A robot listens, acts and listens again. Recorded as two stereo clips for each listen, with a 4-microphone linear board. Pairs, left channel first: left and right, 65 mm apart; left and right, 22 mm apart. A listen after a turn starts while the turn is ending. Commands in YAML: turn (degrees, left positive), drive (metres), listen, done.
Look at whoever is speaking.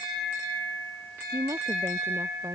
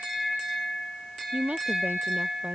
turn: -45
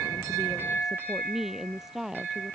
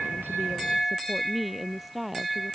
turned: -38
done: "Found it: a woman speaking, straight ahead."